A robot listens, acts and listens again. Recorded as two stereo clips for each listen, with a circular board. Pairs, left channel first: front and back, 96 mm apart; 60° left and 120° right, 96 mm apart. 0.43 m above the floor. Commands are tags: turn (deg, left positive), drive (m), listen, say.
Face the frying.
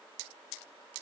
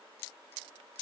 <listen/>
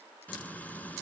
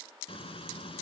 <turn deg="75"/>
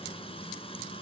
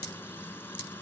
<say>Facing the frying.</say>